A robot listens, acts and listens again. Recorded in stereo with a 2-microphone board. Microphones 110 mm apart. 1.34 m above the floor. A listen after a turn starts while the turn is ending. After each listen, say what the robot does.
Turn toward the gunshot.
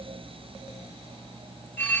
Keep listening.
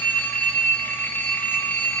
Keep listening.
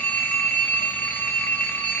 I can't make out a gunshot, only a phone ringing.